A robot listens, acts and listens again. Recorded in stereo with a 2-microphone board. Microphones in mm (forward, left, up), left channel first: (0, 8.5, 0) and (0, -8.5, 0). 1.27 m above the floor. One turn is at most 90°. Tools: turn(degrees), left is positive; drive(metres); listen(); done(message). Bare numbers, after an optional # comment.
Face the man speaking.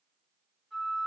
listen()
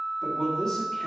# The man speaking: about 30° left or 150° left.
turn(30)
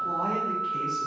listen()
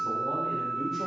listen()
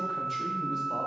done("I heard a man speaking, but can't make it out now. It was about straight ahead or 120° left.")